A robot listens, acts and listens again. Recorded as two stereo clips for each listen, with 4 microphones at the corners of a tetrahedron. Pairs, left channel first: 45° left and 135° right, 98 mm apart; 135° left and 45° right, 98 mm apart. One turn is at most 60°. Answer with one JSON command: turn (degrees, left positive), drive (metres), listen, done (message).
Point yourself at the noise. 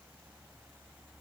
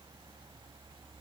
{"listen": true}
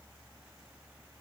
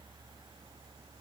{"listen": true}
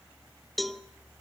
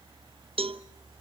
{"turn": -45}
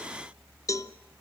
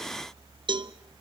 {"turn": -10}
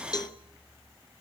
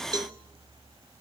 {"done": "Facing the cowbell, under 1 m away."}